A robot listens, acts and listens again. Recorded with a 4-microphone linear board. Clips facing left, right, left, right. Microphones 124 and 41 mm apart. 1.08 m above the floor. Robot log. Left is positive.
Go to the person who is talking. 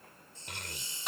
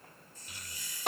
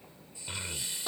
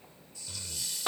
note: The child speaking: about 60° left or 120° left.
cmd yaw +60
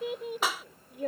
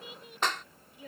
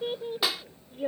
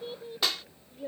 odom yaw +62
note: So it is at 60° left.
cmd yaw +60
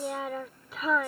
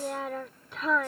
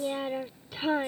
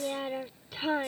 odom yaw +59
cmd fwd 1.0
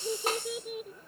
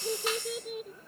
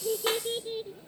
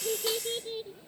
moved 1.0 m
cmd fwd 1.0
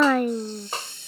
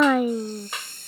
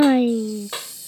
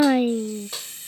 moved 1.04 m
cmd fwd 1.0
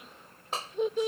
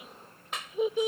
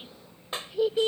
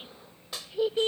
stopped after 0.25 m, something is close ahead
end: Arrived at the child speaking, straight ahead.